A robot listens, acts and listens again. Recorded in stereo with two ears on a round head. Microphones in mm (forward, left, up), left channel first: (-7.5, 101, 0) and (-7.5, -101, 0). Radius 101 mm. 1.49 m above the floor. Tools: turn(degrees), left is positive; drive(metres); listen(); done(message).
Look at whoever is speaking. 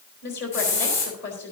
turn(degrees=50)
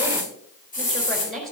done("Found it: a woman speaking, straight ahead.")